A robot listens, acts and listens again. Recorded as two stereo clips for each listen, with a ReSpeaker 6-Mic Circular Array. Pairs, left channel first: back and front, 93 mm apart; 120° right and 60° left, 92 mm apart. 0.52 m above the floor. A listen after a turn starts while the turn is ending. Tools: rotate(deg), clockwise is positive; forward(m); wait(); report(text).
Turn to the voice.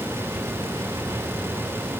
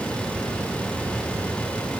wait()
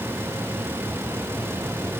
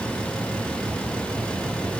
wait()
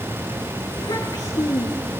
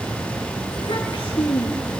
rotate(140)
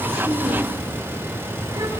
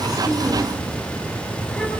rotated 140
wait()
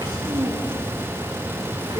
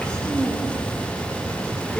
rotate(40)
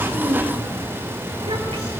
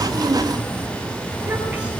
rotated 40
wait()
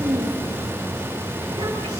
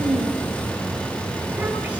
rotate(10)
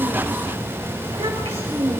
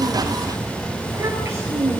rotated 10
report("Facing the child speaking, over 4 m away.")